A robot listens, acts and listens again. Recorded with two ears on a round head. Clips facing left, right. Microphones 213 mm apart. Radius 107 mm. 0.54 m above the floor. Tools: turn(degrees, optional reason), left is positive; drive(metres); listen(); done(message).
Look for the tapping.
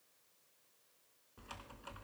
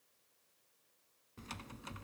listen()
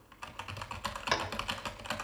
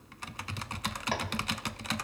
turn(degrees=15, reason="The tapping: about 15° left or 165° left.")
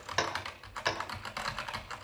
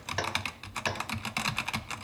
done("Found it: tapping, straight ahead.")